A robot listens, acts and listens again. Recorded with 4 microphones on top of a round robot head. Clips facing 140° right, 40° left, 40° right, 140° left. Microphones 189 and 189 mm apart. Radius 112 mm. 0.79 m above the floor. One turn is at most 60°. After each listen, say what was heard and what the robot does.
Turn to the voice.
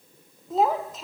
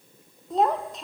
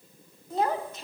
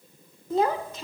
The child speaking: 130° left. Turn 60° left.
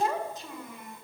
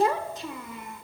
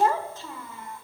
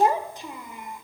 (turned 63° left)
The child speaking is now 65° left. Turn 60° left.
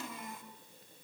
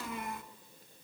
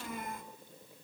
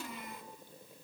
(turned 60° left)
Found it: a child speaking, straight ahead.